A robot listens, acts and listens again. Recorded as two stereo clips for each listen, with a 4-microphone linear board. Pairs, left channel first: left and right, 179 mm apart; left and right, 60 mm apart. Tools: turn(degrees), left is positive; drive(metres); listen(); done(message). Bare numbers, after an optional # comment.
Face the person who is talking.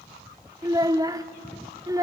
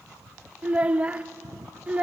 # The child speaking: about 20° right or 160° right.
turn(-20)
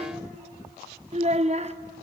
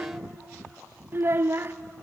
# So it is at 140° right.
turn(-140)
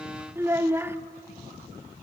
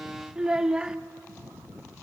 # The child speaking is now 15° right.
turn(-15)
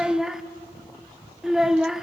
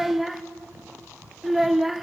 done("Found it: a child speaking, straight ahead, under 1 m away.")